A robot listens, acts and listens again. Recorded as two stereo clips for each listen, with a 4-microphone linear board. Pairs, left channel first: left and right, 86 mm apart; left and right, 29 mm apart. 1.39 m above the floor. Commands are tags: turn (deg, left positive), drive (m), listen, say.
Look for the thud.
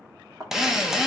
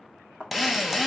<turn deg="-45"/>
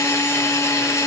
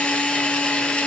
<listen/>
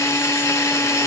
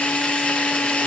<say>I heard a thud, but can't make it out now. It was about straight ahead or 90° right.</say>